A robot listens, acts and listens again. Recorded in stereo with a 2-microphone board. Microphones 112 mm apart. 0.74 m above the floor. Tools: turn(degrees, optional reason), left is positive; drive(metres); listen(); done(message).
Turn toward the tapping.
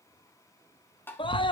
turn(degrees=20, reason="The tapping: about 20° left or 160° left.")
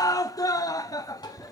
turn(degrees=140, reason="So it is at 140° left.")
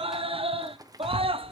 listen()
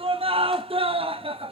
listen()
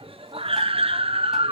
done("Facing where the tapping came from. I can't hear it now.")